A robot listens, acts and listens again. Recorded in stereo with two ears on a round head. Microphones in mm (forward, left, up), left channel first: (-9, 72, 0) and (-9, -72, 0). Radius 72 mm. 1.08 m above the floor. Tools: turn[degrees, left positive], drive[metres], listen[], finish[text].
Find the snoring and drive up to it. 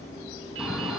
Action: turn[-30]
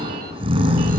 Thought: So it is at 145° right.
Action: turn[-145]
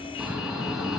Action: drive[1.0]
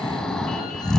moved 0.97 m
Action: drive[1.0]
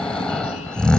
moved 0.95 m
Action: drive[1.0]
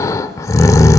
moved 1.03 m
Thought: The snoring is now 25° left.
Action: turn[25]
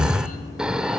Action: drive[1.0]
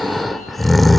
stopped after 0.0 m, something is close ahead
Action: finish[Arrived at the snoring, straight ahead.]